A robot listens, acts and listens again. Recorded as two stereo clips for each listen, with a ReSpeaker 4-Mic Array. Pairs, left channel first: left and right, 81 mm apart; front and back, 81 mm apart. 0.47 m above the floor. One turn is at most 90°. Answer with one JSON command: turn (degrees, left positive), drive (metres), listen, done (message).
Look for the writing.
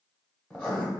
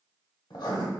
{"turn": 15}
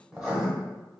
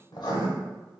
{"done": "Facing the writing."}